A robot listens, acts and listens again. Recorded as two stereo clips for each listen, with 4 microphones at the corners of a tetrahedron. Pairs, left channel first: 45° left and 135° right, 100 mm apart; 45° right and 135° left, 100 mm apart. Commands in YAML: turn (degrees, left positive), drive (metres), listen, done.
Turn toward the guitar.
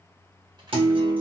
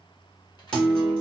turn: -125
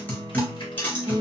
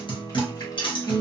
turn: -25
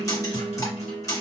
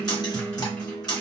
done: "Found it: a guitar, straight ahead."